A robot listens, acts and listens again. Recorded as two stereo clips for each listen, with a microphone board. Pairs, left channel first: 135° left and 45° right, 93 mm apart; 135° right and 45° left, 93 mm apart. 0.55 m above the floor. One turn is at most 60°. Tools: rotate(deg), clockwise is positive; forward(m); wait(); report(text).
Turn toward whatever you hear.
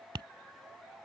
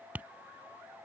rotate(25)
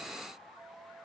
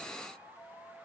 wait()
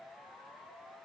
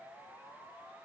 wait()
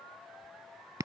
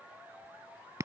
report("Facing the tapping.")